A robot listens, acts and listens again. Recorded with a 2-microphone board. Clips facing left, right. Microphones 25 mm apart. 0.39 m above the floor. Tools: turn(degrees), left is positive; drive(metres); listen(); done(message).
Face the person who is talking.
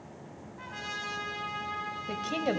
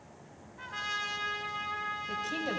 turn(degrees=30)
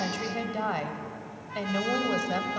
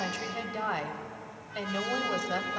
done("Facing the woman speaking.")